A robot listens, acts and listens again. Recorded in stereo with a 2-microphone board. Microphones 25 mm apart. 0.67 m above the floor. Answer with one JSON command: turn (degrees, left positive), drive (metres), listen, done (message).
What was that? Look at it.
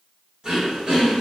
{"turn": -30}
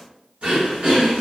{"turn": -120}
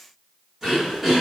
{"done": "Found it: throat clearing, straight ahead, 1 to 2 m away."}